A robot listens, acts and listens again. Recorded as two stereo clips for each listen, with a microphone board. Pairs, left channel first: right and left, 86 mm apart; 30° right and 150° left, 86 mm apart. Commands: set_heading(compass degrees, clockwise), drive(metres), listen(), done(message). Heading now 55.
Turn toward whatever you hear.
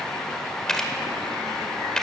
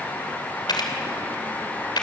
set_heading(65)
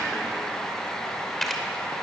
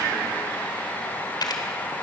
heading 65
done("Facing the camera shutter, 2 to 4 m away.")